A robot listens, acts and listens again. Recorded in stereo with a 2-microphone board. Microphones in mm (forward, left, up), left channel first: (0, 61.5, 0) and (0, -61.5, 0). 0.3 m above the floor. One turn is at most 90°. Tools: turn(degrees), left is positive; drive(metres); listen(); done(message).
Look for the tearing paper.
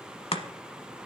listen()
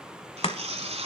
turn(degrees=-70)
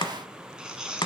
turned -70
done("Found it: tearing paper, straight ahead.")